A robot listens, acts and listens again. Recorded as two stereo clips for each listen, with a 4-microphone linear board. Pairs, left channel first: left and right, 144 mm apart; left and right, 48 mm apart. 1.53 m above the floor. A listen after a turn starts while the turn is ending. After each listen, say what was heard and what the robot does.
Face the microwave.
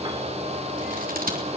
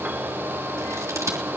Keep listening.
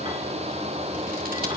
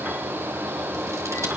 Keep listening.
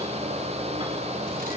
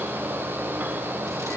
I can't make out a microwave.